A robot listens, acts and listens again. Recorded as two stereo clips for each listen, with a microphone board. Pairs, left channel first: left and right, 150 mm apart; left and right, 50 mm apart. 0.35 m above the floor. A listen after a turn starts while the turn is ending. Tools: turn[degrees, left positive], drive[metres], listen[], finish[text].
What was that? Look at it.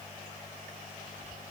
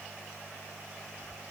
Action: listen[]
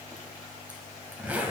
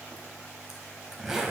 Action: turn[-30]
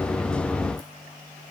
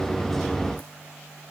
Action: listen[]
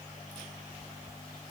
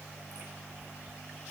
Action: listen[]
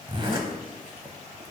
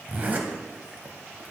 Thought: So it is at 140° right.
Action: turn[-140]
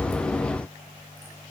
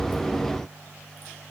Action: listen[]
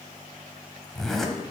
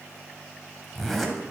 Action: finish[Facing the zipper, 1 to 2 m away.]